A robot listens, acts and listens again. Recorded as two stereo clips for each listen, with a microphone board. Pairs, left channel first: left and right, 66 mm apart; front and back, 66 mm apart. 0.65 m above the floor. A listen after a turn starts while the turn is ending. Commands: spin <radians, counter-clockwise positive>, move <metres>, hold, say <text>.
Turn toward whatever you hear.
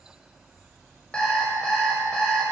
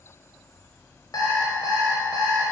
spin 0.26
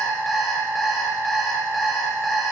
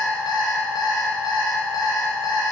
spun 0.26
say Facing the alarm clock.